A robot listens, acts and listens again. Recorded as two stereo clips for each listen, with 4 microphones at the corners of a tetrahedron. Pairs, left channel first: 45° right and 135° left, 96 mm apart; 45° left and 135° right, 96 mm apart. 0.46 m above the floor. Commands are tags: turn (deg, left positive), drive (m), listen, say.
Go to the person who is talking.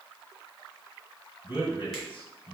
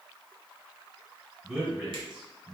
<turn deg="-60"/>
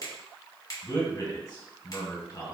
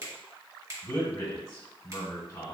<turn deg="-10"/>
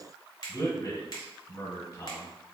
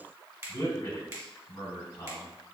<drive m="1.0"/>
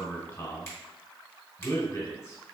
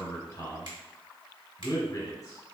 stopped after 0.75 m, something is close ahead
<say>Arrived at the man speaking, straight ahead.</say>